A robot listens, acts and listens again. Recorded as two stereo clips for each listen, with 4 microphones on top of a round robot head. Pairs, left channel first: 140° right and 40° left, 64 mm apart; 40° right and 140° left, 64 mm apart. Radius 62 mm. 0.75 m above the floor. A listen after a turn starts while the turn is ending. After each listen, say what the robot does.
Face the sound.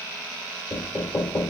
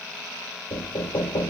Turn 80° right.
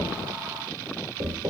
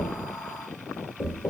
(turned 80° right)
Turn 10° left.
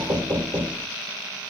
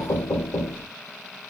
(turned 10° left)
Facing the knocking, 1 to 2 m away.